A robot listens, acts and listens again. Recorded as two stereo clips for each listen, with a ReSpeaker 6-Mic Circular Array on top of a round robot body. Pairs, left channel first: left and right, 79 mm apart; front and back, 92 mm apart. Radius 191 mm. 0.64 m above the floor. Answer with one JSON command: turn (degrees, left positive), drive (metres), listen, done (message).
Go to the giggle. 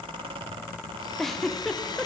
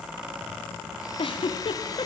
{"drive": 1.0}
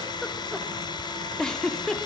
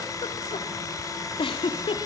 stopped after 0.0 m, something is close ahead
{"done": "Something is in my way. I am facing the giggle but have not reached it."}